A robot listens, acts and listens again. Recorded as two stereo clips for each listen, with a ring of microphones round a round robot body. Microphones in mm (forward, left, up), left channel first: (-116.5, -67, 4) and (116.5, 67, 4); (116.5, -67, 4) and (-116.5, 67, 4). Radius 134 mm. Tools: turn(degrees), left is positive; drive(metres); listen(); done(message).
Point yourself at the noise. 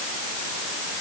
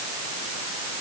listen()
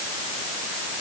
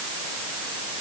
listen()
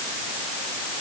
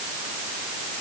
done("I can't make out anything.")